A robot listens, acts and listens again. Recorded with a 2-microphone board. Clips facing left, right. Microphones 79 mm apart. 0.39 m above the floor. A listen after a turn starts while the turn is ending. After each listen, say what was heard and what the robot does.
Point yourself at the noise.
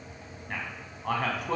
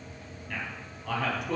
The man speaking: about 50° left or 130° left. Turn 50° left.
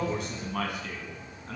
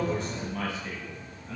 So it is at 60° left. Turn 60° left.
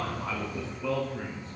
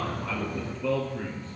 Found it: a man speaking, straight ahead.